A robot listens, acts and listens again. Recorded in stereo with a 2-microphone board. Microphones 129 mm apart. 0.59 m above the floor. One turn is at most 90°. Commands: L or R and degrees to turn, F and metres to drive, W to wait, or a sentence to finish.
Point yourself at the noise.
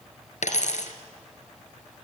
L70
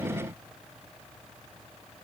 W
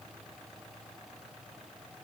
I heard a dropped coin, but can't make it out now. It was about straight ahead or 40° left.